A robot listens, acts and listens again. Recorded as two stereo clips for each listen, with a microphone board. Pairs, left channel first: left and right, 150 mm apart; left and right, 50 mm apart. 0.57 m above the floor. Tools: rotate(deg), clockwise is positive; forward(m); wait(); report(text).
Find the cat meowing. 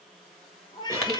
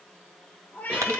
rotate(-25)
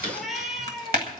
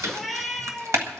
report("Found it: a cat meowing, straight ahead.")